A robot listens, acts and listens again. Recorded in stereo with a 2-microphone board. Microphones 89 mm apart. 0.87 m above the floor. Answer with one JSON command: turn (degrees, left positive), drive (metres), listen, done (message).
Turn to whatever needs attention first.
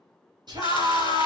{"turn": -50}
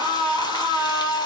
{"turn": -65}
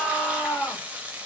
{"turn": 10}
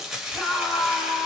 {"done": "Facing the scream, 1 to 2 m away."}